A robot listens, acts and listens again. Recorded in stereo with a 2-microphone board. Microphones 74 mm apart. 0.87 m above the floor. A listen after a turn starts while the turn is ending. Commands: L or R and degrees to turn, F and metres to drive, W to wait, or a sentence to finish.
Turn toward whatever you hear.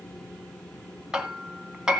R30
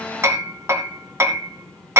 R140
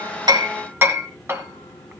R35
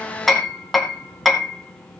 Found it: hammering, straight ahead.